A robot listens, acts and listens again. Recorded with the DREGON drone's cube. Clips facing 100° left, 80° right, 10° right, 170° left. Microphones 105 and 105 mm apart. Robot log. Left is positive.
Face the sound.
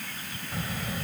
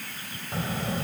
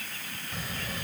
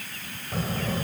note: The child speaking: 140° right.
cmd yaw -140
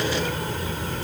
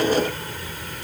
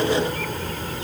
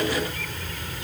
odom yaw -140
note: The child speaking is now 40° left.
cmd yaw +40
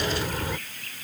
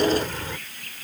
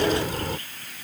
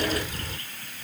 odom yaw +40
note: The child speaking is now 25° left.
cmd yaw +25
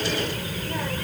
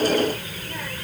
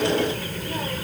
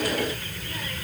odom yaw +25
note: The child speaking is now 35° left.
cmd yaw +35
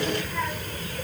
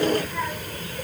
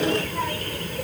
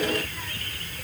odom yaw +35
end: Found it: a child speaking, straight ahead.